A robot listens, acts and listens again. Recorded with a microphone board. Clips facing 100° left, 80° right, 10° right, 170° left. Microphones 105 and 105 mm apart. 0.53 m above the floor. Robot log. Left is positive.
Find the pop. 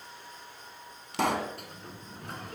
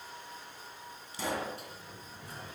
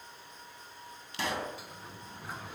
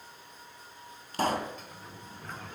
note: The pop: 120° left.
cmd yaw +120
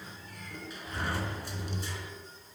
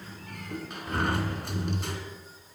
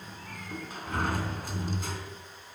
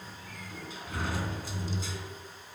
end: I heard a pop from this way, but can't make it out now.